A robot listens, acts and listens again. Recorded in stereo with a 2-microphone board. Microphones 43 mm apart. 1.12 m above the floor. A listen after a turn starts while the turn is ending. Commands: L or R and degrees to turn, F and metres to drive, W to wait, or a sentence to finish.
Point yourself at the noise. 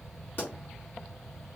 L45
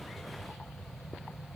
W
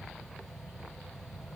I heard a pop, but can't make it out now. It was about straight ahead or 90° left.